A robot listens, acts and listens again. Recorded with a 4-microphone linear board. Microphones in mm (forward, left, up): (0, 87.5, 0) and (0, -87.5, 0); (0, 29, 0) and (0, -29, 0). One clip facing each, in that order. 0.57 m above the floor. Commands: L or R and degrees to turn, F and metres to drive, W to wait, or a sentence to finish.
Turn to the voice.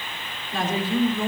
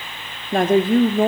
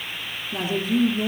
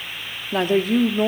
R55
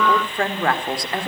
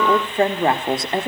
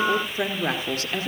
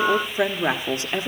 R25
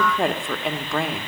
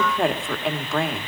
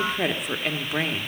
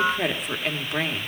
Facing the woman speaking, 1 to 2 m away.